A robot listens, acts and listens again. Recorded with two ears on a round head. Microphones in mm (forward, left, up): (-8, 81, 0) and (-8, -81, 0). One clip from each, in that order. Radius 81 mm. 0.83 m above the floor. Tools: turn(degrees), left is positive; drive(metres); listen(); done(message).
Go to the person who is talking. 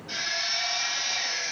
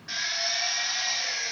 listen()
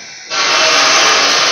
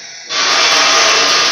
listen()
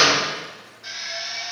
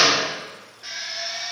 done("I can't make out anyone speaking to turn to.")